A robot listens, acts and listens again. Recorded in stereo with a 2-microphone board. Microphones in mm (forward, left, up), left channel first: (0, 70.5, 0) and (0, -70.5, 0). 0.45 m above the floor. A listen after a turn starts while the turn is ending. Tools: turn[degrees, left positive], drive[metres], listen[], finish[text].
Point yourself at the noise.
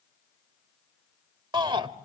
Thought: The shout: about 35° right or 145° right.
Action: turn[-35]
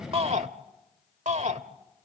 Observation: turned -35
Thought: So it is at 105° right.
Action: turn[-105]
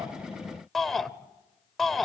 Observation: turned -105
Action: finish[Facing the shout.]